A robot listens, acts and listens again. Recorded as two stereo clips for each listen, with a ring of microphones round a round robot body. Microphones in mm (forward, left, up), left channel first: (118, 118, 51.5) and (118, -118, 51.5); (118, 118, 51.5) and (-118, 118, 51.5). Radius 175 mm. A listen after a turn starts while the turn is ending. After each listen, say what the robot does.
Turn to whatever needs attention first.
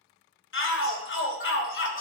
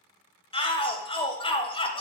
Turn 65° left.
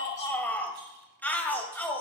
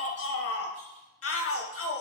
Facing the shout, 1 to 2 m away.